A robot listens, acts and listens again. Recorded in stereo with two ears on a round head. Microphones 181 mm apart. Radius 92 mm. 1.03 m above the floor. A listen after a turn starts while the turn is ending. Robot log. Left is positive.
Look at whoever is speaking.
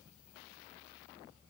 cmd idle
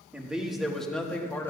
cmd yaw +30
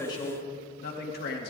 note: So it is at 125° left.
cmd yaw +125
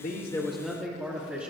note: The man speaking is now 10° right.
cmd yaw -10
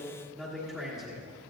end: Facing the man speaking, 2 to 4 m away.